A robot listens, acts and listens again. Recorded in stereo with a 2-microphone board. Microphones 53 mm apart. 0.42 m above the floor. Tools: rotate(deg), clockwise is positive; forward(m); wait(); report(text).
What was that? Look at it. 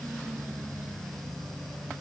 wait()
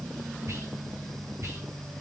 rotate(60)
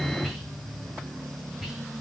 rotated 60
report("Found it: whispering, straight ahead, 2 to 4 m away.")